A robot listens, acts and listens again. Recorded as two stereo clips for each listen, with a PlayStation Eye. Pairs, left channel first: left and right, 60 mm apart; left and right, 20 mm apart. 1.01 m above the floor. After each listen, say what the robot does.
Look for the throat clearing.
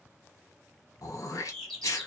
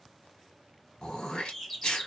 Turn 60° left.
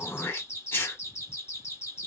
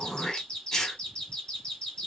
Turn 45° left.
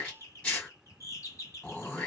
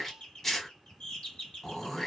Turn 25° left.
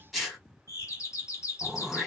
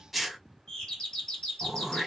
Facing the throat clearing.